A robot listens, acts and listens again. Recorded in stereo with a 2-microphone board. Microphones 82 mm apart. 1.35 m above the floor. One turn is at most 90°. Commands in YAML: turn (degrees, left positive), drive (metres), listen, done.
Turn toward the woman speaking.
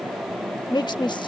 turn: 65
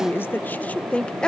turn: 10
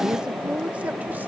turn: -20
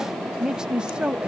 turn: -15
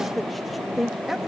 done: "Facing the woman speaking."